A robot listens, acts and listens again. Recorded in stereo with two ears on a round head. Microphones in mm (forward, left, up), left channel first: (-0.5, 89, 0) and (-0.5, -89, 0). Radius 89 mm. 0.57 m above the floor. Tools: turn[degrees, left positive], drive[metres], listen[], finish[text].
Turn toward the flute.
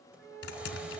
Thought: The flute: about 70° right or 110° right.
Action: turn[-70]
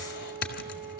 Action: finish[Facing the flute, 2 to 4 m away.]